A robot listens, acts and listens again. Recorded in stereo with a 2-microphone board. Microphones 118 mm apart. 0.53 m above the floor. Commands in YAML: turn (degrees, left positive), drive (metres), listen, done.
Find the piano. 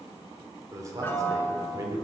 turn: 20
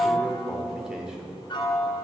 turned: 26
turn: 135
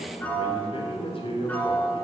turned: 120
turn: 15
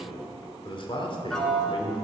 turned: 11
done: "Found it: a piano, straight ahead, 1 to 2 m away."